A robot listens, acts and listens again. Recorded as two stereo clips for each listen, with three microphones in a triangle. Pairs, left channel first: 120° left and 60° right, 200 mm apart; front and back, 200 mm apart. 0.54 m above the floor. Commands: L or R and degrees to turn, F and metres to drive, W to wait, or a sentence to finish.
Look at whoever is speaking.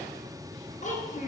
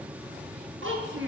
L170
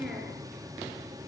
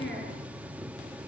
L25
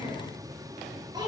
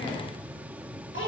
L10
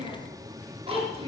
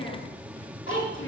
Found it: a child speaking, straight ahead.